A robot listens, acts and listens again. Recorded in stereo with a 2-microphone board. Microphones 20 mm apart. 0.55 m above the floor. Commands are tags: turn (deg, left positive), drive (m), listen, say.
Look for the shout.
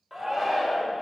<turn deg="-30"/>
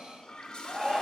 <turn deg="-140"/>
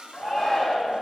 <say>Facing the shout, 2 to 4 m away.</say>